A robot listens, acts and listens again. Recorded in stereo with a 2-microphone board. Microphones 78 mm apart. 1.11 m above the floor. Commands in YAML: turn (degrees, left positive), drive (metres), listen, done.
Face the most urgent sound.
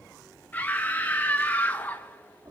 turn: 20
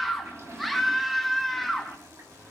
done: "Facing the scream, 1 to 2 m away."